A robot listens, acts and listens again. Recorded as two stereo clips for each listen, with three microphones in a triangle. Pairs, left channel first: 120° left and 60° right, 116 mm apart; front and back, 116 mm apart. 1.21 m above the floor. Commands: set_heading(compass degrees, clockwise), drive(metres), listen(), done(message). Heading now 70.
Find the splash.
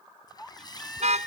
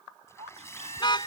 set_heading(5)
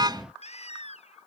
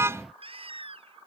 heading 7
done("Facing where the splash came from. I can't hear it now.")